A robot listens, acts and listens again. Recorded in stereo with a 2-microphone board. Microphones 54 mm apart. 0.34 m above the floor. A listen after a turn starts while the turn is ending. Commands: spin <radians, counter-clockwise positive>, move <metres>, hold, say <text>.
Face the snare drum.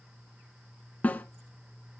spin 0.52
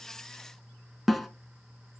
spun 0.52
say Found it: a snare drum, straight ahead, under 1 m away.